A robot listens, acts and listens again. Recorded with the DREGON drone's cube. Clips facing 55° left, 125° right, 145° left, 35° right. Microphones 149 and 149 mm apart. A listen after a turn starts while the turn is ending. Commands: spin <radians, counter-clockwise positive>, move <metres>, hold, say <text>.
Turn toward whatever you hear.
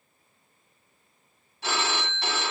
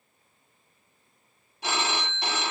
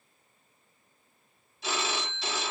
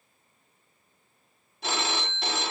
spin -0.87
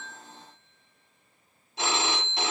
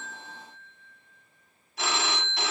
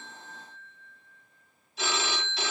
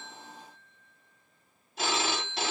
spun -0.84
say Found it: a phone ringing, straight ahead, under 1 m away.